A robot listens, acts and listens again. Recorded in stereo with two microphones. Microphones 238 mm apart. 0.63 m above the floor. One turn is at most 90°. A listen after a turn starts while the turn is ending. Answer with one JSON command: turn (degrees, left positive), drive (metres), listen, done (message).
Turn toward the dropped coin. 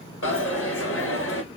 {"turn": 60}
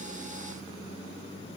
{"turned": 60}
{"listen": true}
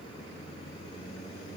{"done": "I heard a dropped coin, but can't make it out now. It was about straight ahead or 60° left."}